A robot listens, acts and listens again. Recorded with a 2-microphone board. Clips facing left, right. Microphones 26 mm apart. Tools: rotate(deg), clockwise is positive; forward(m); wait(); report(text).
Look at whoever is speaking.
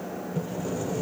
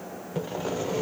wait()
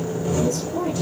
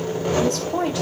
rotate(90)
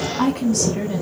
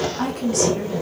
report("Facing the woman speaking, 2 to 4 m away.")